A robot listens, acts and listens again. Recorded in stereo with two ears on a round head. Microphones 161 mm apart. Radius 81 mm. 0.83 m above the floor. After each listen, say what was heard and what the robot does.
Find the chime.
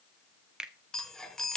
Turn 30° left.
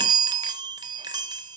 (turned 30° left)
So it is at 25° right. Turn 25° right.
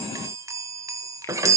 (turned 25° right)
The chime is now 20° right. Turn 20° right.
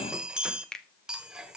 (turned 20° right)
Facing the chime.